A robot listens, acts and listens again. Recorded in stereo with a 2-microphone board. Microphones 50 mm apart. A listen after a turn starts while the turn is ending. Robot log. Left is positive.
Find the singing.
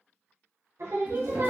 cmd yaw -90
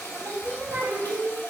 note: So it is at 65° right.
cmd yaw -65
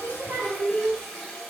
note: The singing is now 50° right.
cmd yaw -50
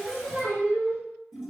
note: The singing is now 35° right.
cmd yaw -35
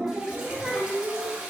note: The singing is now 20° right.
cmd yaw -20
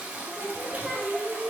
end: Facing the singing, 2 to 4 m away.